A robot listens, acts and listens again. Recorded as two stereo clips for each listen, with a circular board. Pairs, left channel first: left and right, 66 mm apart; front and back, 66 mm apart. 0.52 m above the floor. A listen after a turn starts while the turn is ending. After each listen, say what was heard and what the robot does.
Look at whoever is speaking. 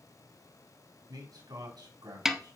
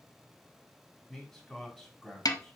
The man speaking: 85° right. Turn 85° right.
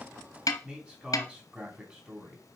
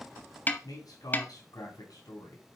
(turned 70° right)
The man speaking is now 15° right. Turn 15° right.
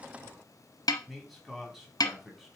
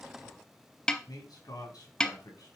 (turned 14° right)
Found it: a man speaking, straight ahead, 2 to 4 m away.